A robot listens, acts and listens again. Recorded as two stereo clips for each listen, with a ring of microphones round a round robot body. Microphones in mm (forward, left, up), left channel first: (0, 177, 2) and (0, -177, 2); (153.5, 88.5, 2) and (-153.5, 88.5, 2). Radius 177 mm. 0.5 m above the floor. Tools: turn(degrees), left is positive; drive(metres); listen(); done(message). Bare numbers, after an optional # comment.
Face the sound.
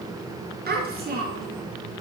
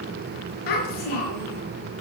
# The child speaking: 25° right.
turn(-25)
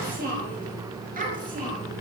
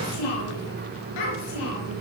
# The child speaking is now 20° right.
turn(-20)
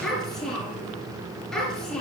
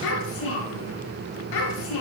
done("Facing the child speaking.")